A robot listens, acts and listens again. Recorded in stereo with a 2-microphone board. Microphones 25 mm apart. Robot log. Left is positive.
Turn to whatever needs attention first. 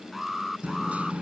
cmd yaw -30
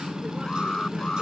note: So it is at 25° left.
cmd yaw +25
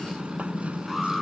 end: Found it: an alarm, straight ahead.